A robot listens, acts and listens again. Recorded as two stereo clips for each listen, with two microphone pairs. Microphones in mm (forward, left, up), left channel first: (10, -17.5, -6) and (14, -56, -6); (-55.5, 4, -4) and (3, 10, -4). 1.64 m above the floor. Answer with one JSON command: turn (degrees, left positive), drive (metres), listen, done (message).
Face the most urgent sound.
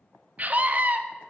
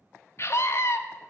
{"turn": -135}
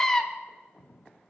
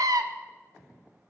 {"turn": 15}
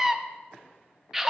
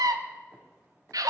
{"done": "Found it: a scream, straight ahead, under 1 m away."}